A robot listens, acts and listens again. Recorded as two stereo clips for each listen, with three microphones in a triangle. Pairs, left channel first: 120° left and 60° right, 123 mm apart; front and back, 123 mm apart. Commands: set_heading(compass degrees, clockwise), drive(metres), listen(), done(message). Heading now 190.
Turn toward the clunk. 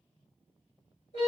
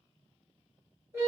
listen()
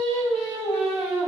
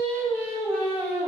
listen()
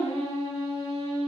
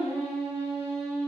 done("I can't make out a clunk to turn to.")